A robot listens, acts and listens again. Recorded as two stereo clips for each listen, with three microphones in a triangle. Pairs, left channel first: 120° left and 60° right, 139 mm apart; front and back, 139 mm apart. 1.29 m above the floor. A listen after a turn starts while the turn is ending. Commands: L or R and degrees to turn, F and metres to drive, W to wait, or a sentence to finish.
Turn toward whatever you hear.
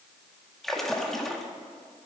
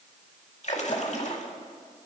L30
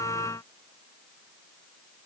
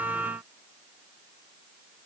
I heard a splash from this way, but can't make it out now.